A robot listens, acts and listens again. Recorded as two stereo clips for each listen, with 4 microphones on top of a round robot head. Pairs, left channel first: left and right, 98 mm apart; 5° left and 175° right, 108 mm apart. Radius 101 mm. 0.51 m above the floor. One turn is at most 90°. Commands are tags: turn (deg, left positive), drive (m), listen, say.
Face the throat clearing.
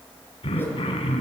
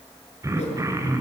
<turn deg="90"/>
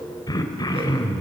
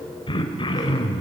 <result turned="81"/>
<turn deg="45"/>
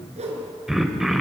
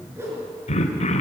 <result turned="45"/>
<say>Found it: throat clearing, straight ahead, 2 to 4 m away.</say>